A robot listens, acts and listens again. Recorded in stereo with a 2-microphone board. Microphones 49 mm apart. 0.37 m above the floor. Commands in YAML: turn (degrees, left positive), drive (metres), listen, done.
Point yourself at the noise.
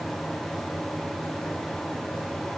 listen: true
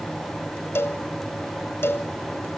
turn: 60
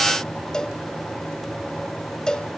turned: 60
turn: 15
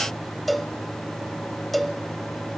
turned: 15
done: "Facing the cowbell."